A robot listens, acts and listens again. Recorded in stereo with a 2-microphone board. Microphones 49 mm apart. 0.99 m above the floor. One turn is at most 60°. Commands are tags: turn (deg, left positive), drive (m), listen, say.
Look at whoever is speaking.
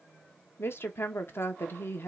<turn deg="55"/>
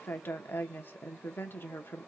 <turn deg="60"/>
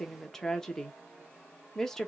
<turn deg="10"/>
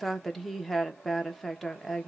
<say>Found it: a woman speaking, straight ahead, under 1 m away.</say>